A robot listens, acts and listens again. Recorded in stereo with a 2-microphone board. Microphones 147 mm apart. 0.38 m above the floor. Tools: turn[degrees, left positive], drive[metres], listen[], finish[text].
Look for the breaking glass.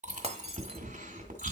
Thought: The breaking glass: about 45° right or 135° right.
Action: turn[-45]
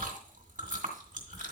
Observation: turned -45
Action: listen[]
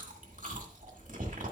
Action: finish[I heard breaking glass, but can't make it out now. It was about straight ahead or 90° right.]